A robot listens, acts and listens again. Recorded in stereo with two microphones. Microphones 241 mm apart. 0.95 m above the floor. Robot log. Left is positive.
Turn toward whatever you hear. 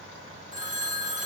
note: The phone ringing: about 30° right or 150° right.
cmd yaw -30
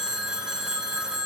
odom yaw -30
end: Facing the phone ringing, 1 to 2 m away.